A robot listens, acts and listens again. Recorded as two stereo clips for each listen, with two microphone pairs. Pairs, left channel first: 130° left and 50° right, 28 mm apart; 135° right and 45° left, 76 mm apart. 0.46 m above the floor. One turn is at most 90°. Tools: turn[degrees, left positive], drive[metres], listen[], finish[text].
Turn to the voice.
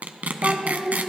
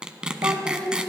Thought: The child speaking: 25° left.
Action: turn[25]
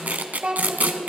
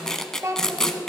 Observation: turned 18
Action: finish[Found it: a child speaking, straight ahead, 1 to 2 m away.]